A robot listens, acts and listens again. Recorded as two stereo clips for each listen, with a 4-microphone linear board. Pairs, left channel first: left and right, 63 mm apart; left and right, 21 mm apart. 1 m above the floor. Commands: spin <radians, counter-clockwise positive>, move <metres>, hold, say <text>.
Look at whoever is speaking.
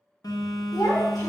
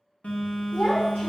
spin 1.13
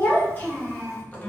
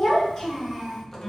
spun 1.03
spin 0.52
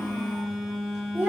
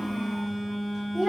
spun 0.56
spin -0.61
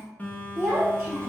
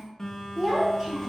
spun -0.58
spin -0.44
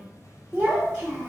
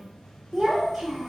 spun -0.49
say Found it: a child speaking, straight ahead.